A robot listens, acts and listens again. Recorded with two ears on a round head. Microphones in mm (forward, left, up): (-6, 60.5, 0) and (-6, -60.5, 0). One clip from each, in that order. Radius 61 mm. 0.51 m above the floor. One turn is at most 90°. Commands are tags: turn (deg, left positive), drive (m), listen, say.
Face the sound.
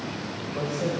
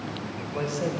<turn deg="-60"/>
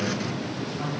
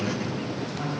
<turn deg="-10"/>
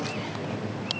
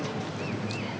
<say>Facing the man speaking.</say>